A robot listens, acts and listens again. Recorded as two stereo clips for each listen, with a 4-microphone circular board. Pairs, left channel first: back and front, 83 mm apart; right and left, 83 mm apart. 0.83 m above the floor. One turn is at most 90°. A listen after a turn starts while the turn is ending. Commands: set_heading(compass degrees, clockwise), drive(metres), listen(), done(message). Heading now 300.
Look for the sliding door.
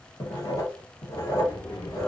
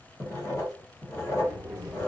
set_heading(210)
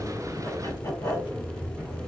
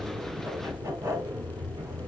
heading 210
set_heading(140)
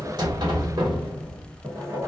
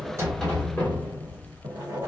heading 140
set_heading(160)
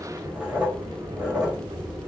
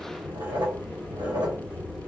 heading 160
done("Facing the sliding door.")